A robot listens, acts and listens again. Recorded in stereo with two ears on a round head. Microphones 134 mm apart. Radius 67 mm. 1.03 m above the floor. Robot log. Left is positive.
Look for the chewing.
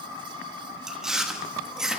cmd yaw -30
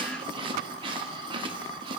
note: So it is at 145° right.
cmd yaw -145
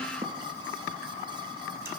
cmd idle
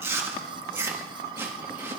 note: The chewing is now 15° right.
cmd yaw -15
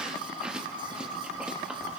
end: Facing the chewing, 1 to 2 m away.